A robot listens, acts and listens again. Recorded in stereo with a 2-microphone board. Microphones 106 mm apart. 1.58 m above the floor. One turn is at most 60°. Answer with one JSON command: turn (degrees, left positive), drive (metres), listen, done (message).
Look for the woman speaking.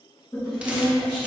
{"turn": 30}
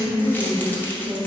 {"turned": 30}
{"turn": -35}
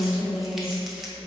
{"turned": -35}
{"turn": -30}
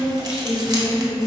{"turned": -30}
{"turn": -15}
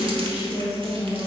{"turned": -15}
{"done": "Found it: a woman speaking, straight ahead, 1 to 2 m away."}